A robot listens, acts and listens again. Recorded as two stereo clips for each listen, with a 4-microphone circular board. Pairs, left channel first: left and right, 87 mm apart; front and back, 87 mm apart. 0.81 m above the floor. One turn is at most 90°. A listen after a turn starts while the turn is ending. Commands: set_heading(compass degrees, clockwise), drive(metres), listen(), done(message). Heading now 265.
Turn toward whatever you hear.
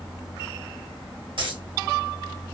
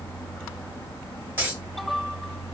set_heading(355)
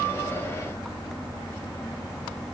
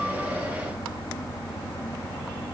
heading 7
set_heading(17)
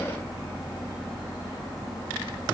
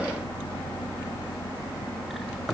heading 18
done("Facing where the dropped coin came from. I can't hear it now.")